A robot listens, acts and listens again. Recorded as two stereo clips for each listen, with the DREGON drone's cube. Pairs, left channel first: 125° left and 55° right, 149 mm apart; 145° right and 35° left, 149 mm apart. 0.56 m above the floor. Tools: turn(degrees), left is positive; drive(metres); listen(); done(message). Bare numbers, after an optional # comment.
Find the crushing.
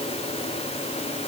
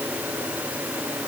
listen()
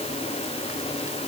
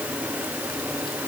listen()
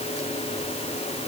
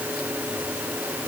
done("I can't make out crushing.")